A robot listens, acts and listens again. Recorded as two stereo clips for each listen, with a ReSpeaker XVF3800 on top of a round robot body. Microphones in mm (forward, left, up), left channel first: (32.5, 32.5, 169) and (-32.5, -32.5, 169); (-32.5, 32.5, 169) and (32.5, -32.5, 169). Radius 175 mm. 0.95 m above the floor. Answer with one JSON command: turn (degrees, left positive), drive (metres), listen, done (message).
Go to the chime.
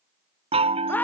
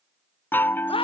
{"turn": -155}
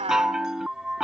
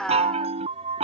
{"turn": -50}
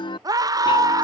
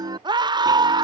{"drive": 1.0}
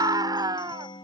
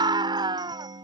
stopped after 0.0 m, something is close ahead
{"done": "Blocked. The chime is further on, straight ahead."}